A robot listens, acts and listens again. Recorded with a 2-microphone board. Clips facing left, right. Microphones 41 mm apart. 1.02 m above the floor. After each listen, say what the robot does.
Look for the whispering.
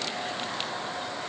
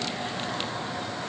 Keep listening.
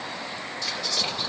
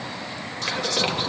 Turn 55° right.
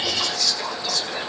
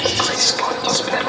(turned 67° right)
Turn 60° right.
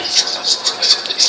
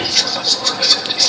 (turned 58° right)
Facing the whispering.